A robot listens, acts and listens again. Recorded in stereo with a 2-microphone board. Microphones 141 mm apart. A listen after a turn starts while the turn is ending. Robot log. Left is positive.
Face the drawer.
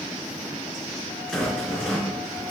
cmd idle
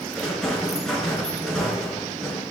cmd idle
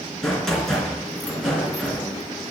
end: I can't make out a drawer to turn to.